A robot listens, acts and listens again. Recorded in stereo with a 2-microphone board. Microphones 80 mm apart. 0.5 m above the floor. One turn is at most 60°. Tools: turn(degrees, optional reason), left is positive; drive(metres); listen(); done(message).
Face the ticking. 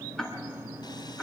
turn(degrees=30)
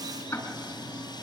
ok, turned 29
turn(degrees=60, reason="So it is at 145° left.")
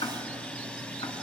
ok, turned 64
turn(degrees=60, reason="The ticking is now 80° left.")
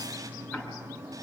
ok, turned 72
turn(degrees=10, reason="The ticking is now 10° left.")
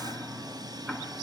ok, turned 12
done("Found it: ticking, straight ahead.")